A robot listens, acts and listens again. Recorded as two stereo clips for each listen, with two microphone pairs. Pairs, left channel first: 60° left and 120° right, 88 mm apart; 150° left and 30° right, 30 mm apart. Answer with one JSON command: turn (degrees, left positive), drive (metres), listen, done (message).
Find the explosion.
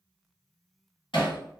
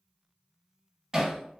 {"listen": true}
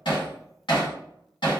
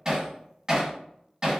{"listen": true}
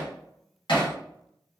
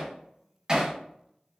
{"done": "I can't make out an explosion to turn to."}